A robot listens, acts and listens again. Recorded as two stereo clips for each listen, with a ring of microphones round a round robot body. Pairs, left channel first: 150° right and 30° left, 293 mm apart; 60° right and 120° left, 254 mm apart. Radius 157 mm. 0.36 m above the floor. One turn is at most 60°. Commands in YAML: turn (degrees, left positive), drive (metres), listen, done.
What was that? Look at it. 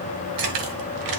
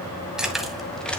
turn: 25
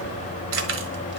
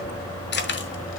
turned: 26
turn: -15
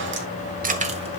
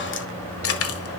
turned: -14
turn: -35
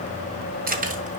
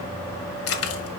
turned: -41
turn: -35
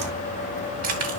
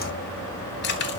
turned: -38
turn: -10
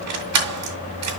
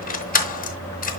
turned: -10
done: "Found it: keys jangling, straight ahead."